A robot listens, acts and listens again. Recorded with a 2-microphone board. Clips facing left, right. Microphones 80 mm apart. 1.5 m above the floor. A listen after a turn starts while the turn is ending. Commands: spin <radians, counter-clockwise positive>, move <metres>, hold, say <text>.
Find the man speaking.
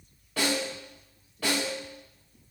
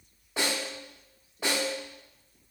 hold
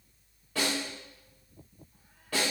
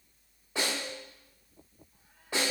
hold
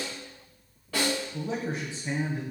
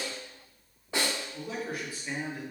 spin 0.44
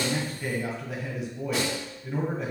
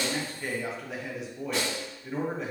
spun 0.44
say Found it: a man speaking, straight ahead, 1 to 2 m away.